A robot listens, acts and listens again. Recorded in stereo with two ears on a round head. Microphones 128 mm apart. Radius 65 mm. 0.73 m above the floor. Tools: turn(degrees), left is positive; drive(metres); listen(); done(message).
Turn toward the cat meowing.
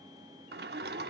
listen()
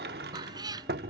turn(degrees=-30)
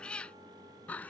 turn(degrees=10)
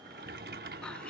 listen()
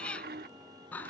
turn(degrees=10)
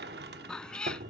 done("Found it: a cat meowing, straight ahead.")